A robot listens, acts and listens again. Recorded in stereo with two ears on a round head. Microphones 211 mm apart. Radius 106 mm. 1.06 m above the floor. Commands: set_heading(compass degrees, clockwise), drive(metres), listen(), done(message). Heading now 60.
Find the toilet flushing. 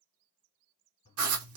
set_heading(35)
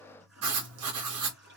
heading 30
done("Found it: a toilet flushing, straight ahead, 1 to 2 m away.")